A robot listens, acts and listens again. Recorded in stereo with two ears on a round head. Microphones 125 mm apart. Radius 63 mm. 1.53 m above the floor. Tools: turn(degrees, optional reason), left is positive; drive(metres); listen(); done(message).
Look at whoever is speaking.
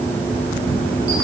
listen()
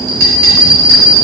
listen()
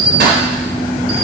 done("I can't make out anyone speaking, only a bell.")